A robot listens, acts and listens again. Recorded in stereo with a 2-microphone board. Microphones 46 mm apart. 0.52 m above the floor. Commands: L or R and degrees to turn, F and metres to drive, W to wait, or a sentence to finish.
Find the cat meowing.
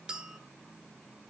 W
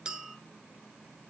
W
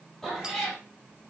L30
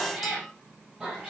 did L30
R10
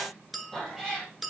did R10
Found it: a cat meowing, straight ahead.